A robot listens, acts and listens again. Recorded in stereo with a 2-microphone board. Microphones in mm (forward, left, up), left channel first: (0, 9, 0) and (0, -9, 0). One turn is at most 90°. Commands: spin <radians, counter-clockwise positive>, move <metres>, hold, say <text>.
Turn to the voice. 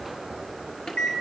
hold
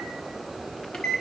hold
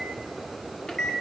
say I can't make out anyone speaking to turn to.